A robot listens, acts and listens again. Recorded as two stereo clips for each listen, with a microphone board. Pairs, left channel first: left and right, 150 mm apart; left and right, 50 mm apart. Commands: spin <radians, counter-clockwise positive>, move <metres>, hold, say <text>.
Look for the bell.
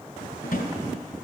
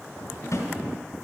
hold
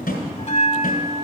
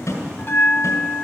spin 0.87
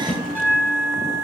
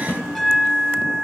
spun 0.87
spin 0.17
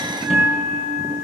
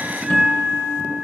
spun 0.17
say Facing the bell, under 1 m away.